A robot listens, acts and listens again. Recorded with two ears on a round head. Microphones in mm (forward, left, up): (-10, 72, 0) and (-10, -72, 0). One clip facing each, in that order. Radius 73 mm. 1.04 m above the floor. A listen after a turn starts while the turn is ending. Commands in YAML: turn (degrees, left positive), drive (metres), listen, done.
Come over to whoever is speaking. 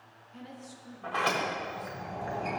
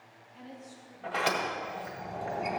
turn: 70
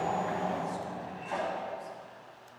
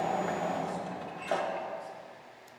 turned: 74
listen: true
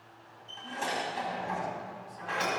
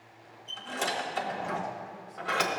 listen: true
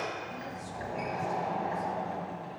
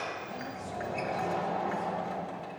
done: "I heard a woman speaking, but can't make it out now. It was about 5° right or 40° left. I did not reach it."